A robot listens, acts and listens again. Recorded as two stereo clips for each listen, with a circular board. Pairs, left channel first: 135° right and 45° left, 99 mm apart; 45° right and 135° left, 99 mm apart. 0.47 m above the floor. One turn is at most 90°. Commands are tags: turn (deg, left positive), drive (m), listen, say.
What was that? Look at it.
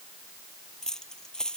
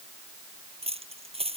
<turn deg="90"/>
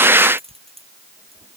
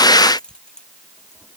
<turn deg="35"/>
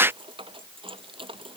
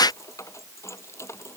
<turn deg="20"/>
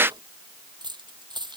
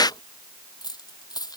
<say>Facing the keys jangling.</say>